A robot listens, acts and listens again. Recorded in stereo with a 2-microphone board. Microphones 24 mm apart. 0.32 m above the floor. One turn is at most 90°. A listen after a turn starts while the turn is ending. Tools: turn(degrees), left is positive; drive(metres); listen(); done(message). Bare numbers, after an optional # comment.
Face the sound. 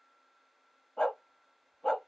# The dog barking: about 40° left or 140° left.
turn(40)
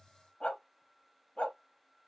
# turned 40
# So it is at 95° left.
turn(90)
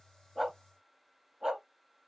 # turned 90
# The dog barking is now 20° right.
turn(-20)
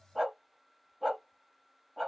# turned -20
done("Found it: a dog barking, straight ahead.")